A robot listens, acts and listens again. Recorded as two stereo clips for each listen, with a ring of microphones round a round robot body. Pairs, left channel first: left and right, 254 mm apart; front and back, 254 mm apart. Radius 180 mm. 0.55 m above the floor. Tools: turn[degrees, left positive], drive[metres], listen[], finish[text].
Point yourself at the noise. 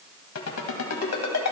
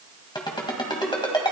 Thought: The ringtone: 70° left.
Action: turn[70]
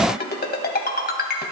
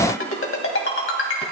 Thought: The ringtone is now 35° left.
Action: turn[35]
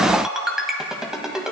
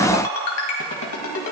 Action: finish[Found it: a ringtone, straight ahead.]